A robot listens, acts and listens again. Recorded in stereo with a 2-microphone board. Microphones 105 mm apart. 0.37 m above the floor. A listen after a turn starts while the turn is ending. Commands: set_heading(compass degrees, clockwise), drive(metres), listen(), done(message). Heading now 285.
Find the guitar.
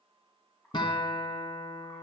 set_heading(235)
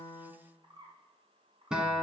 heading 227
done("Found it: a guitar, straight ahead, 1 to 2 m away.")